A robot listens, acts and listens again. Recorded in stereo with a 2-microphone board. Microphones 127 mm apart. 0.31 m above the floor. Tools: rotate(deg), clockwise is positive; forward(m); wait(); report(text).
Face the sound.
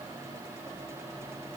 wait()
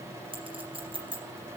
rotate(40)
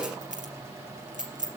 rotate(95)
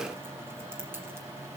wait()
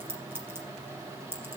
rotate(15)
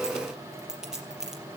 report("Facing the clink, over 4 m away.")